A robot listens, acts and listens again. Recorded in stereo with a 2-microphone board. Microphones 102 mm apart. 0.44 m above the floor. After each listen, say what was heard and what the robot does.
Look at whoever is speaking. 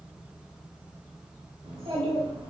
The child speaking: about 60° right or 120° right. Turn 60° right.
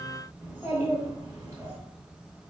So it is at 30° right. Turn 30° right.
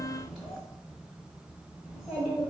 Facing the child speaking.